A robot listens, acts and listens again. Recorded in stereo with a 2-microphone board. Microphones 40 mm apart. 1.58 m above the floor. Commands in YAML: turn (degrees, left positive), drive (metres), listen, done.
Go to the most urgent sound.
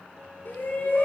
turn: 55
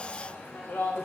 turn: 70
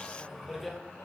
drive: 1.0
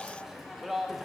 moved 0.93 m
drive: 1.0
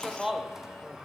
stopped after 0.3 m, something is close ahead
turn: -10
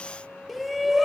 done: "I am next to the shout."